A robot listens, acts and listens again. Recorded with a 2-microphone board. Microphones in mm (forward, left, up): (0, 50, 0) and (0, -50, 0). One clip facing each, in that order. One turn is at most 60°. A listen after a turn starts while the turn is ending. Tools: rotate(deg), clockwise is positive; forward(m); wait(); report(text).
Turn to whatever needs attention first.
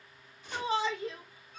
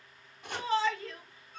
rotate(-15)
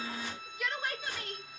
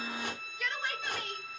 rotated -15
report("Facing the shout, over 4 m away.")